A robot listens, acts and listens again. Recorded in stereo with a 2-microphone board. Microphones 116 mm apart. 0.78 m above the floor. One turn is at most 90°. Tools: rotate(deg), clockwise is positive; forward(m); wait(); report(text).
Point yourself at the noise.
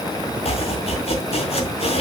rotate(-55)
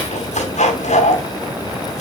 rotate(-75)
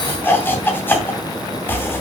rotate(-20)
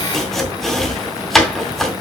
report("Facing the chopping, 2 to 4 m away.")